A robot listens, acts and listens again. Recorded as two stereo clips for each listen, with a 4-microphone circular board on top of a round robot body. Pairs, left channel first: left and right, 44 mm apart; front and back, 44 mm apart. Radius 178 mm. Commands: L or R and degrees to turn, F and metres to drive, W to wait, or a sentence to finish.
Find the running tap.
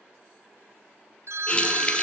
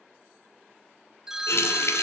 L25
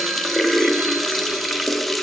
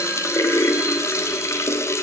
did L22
Facing the running tap.